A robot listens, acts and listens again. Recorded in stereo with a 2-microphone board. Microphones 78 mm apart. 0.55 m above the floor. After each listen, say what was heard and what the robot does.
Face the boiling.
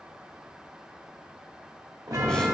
Keep listening.
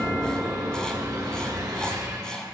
Keep listening.
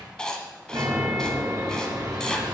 I can't make out boiling, only writing and a chime.